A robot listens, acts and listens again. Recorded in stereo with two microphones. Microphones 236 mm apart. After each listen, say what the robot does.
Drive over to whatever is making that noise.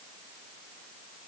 Keep listening.
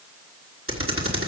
Turn 65° right.
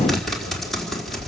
Drive 1.0 m forward.
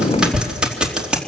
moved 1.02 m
Drive 1.0 m forward.
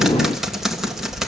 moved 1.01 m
Drive 1.0 m forward.
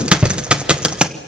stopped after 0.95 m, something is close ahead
Arrived at the typing on a keyboard, straight ahead.